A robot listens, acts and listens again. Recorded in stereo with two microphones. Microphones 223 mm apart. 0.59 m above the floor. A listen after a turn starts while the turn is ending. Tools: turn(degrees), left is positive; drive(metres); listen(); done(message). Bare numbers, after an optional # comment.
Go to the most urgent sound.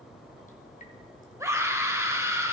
turn(-30)
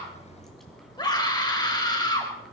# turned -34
# So it is at 20° left.
turn(20)
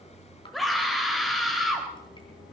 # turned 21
drive(1.0)
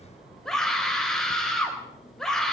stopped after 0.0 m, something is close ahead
done("Something is in my way. I am facing the scream but have not reached it.")